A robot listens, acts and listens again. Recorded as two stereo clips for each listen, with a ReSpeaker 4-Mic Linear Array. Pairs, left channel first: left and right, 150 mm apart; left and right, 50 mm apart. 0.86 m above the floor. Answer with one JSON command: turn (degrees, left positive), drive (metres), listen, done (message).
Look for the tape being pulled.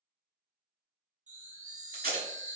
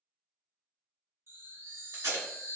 {"turn": -90}
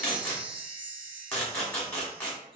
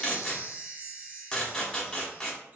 {"turn": 10}
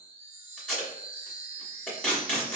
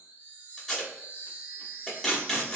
{"done": "Facing the tape being pulled."}